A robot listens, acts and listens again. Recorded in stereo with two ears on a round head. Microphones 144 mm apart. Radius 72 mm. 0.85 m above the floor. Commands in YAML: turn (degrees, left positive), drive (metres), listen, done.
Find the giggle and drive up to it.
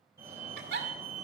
turn: -65
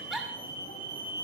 drive: 1.0
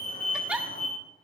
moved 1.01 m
drive: 1.0
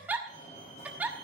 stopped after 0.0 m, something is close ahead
turn: -10
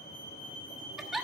done: "Arrived at the giggle, straight ahead."